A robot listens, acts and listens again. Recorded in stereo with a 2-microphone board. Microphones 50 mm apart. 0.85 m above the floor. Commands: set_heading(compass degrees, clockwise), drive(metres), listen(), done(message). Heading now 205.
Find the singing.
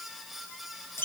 listen()
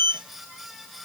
listen()
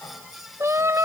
set_heading(295)
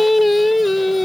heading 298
done("Facing the singing.")